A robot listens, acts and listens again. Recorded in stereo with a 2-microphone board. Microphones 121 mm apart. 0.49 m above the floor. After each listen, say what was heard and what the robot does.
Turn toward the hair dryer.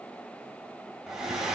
Turn 30° right.
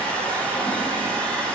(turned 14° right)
So it is at 10° left. Turn 10° left.
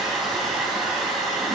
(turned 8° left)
Facing the hair dryer, 2 to 4 m away.